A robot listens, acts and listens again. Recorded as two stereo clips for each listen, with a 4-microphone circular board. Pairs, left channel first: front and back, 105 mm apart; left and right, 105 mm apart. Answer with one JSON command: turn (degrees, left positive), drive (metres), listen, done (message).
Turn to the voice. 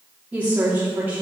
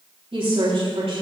{"turn": -105}
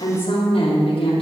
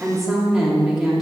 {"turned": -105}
{"done": "Found it: a woman speaking, straight ahead, 2 to 4 m away."}